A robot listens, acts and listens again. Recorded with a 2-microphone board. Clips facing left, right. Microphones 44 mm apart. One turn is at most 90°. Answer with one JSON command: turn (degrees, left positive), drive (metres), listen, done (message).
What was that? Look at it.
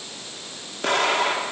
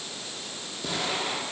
{"turn": 65}
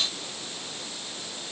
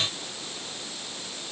{"listen": true}
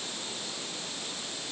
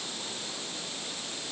{"done": "I heard an explosion, but can't make it out now. It was about straight ahead or 50° left."}